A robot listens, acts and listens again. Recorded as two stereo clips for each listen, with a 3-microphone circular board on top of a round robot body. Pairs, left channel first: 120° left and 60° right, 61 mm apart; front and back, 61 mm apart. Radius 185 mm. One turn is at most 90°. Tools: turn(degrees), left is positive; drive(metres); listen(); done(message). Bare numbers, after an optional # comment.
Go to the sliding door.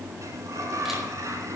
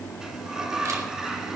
# The sliding door: 100° right.
turn(-90)
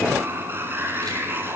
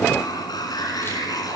drive(1.0)
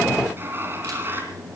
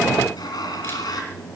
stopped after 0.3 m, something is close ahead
done("Something is in my way. I am facing the sliding door but have not reached it.")